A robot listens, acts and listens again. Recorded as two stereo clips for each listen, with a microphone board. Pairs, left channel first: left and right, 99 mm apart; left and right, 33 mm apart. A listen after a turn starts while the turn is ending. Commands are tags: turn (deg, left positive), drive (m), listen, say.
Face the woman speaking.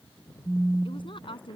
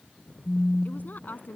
<turn deg="60"/>
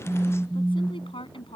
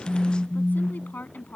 <turn deg="60"/>
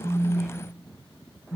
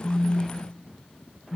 <listen/>
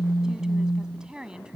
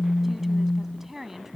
<turn deg="-10"/>
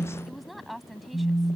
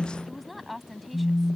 <say>Found it: a woman speaking, straight ahead.</say>